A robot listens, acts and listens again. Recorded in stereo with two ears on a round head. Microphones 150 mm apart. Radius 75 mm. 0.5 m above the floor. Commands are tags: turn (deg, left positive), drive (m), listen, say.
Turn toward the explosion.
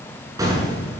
<turn deg="-20"/>
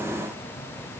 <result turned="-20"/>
<listen/>
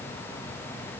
<say>I heard an explosion, but can't make it out now. It was about straight ahead or 140° right.</say>